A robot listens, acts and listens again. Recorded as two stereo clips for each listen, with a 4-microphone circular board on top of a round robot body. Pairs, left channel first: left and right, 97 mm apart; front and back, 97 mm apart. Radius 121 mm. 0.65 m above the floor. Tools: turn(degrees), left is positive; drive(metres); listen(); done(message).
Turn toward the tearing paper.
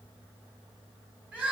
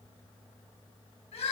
listen()
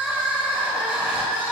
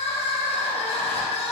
listen()
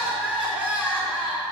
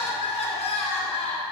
done("I can't make out tearing paper to turn to.")